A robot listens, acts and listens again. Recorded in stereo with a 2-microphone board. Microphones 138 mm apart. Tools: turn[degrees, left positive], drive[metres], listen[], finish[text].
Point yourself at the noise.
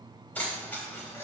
Thought: The keys jangling: about 15° left or 165° left.
Action: turn[15]
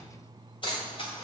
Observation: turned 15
Thought: The keys jangling: about 40° left or 140° left.
Action: turn[40]
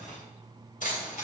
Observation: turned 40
Thought: So it is at 95° left.
Action: turn[95]
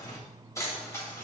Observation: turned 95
Thought: The keys jangling is now 20° left.
Action: turn[20]
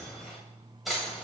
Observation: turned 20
Action: finish[Facing the keys jangling.]